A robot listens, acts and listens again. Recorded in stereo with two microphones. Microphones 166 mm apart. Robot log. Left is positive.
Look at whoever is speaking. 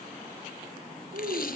cmd yaw -90
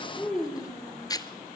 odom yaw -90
end: Found it: a child speaking, straight ahead, over 4 m away.